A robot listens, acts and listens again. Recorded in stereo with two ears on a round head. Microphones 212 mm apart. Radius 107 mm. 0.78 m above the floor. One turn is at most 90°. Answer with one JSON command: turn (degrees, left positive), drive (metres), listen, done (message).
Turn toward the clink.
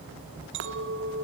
{"turn": -55}
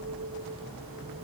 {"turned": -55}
{"turn": -65}
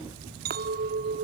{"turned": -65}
{"turn": -40}
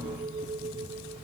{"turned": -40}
{"turn": -20}
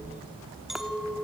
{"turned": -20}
{"done": "Facing the clink."}